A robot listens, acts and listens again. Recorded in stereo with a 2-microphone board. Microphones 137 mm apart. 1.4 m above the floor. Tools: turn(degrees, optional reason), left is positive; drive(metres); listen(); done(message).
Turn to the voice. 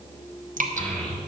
turn(degrees=30)
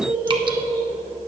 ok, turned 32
turn(degrees=-25, reason="So it is at 25° right.")
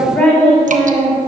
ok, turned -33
turn(degrees=10, reason="The child speaking is now 10° left.")
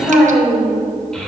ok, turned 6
done("Found it: a child speaking, straight ahead, 2 to 4 m away.")